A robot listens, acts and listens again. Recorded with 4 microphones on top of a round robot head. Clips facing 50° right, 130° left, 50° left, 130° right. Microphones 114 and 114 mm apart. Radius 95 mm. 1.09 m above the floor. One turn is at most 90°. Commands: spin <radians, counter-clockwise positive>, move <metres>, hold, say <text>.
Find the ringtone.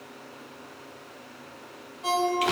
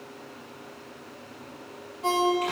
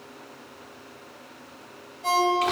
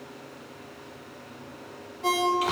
spin -1.57
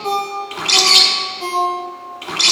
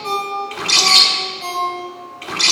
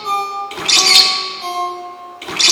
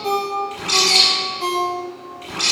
spin -1.57
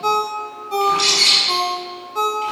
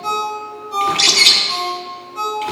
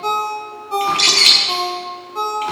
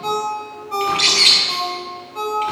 spin -0.26
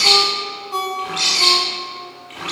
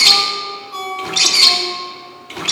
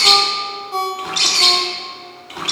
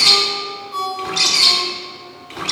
say Found it: a ringtone, straight ahead.